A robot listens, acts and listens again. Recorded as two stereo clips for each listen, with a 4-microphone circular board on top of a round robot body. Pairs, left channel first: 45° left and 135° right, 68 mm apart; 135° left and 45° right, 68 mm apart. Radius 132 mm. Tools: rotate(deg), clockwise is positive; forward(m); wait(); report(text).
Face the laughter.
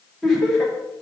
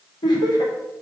rotate(-130)
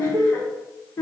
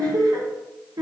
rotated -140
rotate(15)
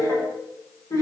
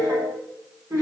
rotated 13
report("Facing the laughter, over 4 m away.")